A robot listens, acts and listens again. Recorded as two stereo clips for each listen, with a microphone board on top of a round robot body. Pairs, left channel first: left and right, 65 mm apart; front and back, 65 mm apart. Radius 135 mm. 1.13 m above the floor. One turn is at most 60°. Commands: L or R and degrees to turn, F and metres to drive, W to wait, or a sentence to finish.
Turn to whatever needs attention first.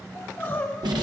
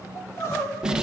L35
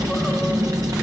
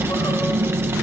W
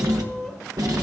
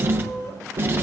L10
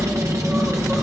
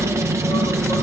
W
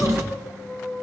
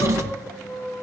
Facing the crying, 2 to 4 m away.